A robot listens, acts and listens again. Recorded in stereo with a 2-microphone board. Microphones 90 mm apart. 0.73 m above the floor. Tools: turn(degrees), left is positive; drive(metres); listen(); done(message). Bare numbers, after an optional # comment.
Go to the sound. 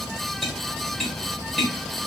turn(30)
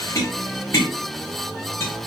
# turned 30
# So it is at 150° left.
turn(150)
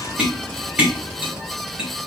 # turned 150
# The tapping is now 10° right.
turn(-10)
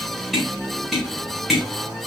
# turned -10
drive(1.0)
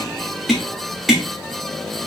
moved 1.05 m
drive(1.0)
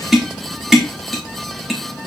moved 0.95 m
drive(1.0)
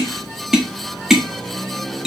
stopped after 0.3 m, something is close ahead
done("I am next to the tapping.")